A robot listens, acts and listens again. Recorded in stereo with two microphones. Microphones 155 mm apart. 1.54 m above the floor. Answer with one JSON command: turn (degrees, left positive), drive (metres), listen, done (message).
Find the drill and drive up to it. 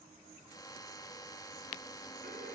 {"turn": 25}
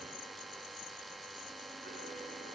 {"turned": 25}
{"drive": 1.0}
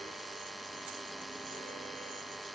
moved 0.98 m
{"drive": 1.0}
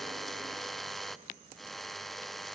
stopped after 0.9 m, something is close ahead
{"done": "I am next to the drill."}